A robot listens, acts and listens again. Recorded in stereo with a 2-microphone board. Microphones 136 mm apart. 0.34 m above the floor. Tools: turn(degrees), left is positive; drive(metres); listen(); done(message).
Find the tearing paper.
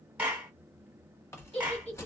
turn(degrees=20)
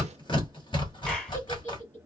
turn(degrees=135)
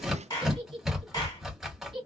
done("Facing the tearing paper.")